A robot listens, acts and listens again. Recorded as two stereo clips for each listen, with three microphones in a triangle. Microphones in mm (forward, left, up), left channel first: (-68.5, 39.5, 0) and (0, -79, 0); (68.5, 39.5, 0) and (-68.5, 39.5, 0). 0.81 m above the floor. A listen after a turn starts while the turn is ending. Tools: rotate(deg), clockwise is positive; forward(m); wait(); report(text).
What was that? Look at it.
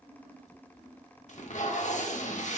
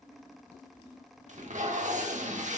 rotate(-150)
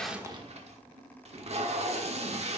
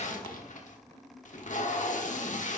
rotate(25)
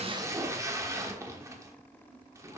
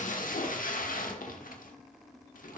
report("Found it: tape being pulled, straight ahead.")